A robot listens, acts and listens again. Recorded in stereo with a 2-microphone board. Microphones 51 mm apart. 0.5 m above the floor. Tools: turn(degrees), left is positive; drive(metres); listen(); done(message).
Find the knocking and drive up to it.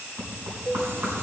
turn(degrees=-70)
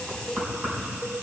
turn(degrees=-35)
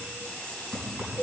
turn(degrees=-35)
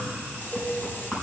turn(degrees=-10)
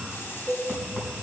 drive(metres=1.0)
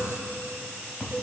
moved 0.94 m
drive(metres=1.0)
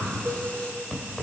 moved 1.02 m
turn(degrees=10)
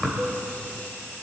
drive(metres=1.0)
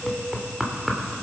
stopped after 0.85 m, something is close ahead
done("I am next to the knocking.")